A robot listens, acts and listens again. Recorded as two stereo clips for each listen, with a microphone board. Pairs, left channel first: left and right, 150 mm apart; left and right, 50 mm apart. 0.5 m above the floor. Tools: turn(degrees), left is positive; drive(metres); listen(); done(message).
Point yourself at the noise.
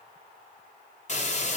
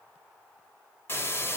turn(degrees=50)
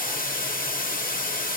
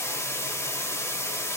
turn(degrees=75)
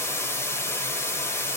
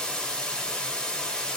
turn(degrees=15)
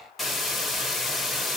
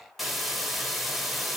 done("Facing the hiss, 1 to 2 m away.")